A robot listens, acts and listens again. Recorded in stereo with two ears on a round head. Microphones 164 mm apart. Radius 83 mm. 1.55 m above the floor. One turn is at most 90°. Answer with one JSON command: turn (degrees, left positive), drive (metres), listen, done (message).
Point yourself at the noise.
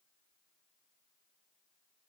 {"listen": true}
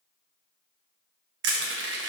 {"turn": -65}
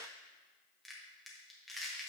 {"done": "Found it: crushing, straight ahead, 1 to 2 m away."}